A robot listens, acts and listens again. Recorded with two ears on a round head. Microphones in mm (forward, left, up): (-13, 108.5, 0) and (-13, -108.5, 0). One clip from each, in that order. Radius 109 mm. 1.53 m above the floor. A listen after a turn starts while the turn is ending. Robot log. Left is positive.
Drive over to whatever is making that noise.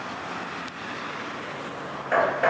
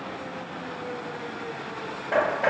note: The hammering: about 50° left or 130° left.
cmd yaw +50
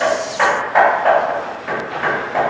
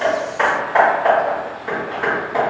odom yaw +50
cmd fwd 1.0
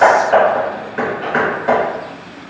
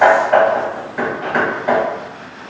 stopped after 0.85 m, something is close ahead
end: I am next to the hammering.